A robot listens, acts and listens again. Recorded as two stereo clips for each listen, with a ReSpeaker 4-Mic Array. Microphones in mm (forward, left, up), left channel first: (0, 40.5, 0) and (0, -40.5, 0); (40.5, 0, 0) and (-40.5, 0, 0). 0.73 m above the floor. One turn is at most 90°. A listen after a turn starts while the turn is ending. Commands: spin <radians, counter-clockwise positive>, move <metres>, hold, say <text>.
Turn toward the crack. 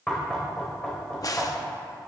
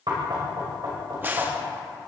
spin 1.57
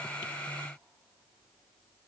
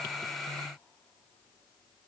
spin 0.52
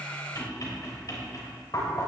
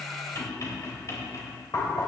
say I heard a crack from this way, but can't make it out now.